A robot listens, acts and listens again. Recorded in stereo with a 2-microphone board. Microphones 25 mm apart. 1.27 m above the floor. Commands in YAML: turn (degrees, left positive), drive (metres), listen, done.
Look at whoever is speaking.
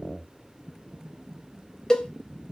listen: true
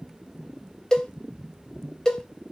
listen: true
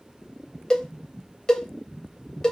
done: "I can't make out anyone speaking, only a cowbell."